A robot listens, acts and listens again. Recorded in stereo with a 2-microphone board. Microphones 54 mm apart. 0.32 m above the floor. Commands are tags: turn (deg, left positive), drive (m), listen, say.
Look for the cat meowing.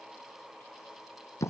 <listen/>
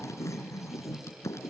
<listen/>
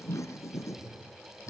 <turn deg="-55"/>
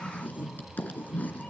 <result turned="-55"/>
<turn deg="15"/>
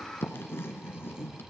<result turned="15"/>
<turn deg="10"/>
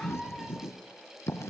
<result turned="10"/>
<say>Facing the cat meowing.</say>